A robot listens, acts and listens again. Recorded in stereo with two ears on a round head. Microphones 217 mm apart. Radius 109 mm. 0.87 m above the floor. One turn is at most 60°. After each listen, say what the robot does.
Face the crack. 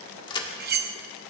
Turn 20° left.
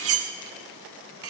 Keep listening.
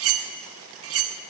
I heard a crack, but can't make it out now. It was about straight ahead or 140° left.